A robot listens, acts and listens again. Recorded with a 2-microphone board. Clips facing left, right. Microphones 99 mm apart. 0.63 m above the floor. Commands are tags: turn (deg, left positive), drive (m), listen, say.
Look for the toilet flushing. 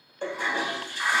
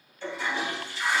<turn deg="45"/>
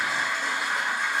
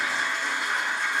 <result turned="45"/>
<say>Found it: a toilet flushing, straight ahead, under 1 m away.</say>